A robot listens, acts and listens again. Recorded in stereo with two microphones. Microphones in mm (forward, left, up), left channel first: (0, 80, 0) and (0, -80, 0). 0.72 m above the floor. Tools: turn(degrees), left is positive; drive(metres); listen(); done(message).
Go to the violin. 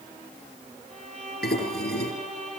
turn(degrees=-55)
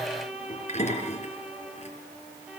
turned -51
turn(degrees=-10)
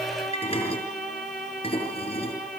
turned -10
drive(metres=1.0)
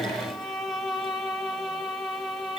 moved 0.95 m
drive(metres=1.0)
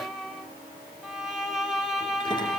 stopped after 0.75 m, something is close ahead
done("Arrived at the violin, straight ahead.")